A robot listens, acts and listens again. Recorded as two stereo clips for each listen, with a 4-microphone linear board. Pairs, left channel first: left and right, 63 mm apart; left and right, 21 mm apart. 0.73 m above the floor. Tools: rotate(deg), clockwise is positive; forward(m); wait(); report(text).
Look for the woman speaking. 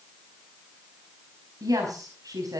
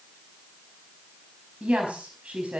rotate(70)
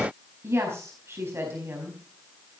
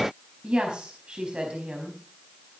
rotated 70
rotate(45)
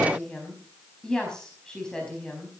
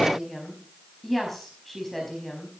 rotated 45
rotate(-10)
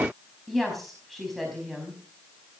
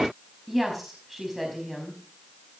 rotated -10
report("Found it: a woman speaking, straight ahead, over 4 m away.")